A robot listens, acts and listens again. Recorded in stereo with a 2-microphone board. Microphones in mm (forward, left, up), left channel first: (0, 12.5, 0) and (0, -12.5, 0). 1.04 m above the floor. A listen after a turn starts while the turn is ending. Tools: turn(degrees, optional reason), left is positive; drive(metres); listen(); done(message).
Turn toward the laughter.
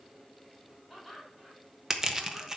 turn(degrees=-30)
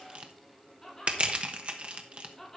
done("Found it: laughter, straight ahead.")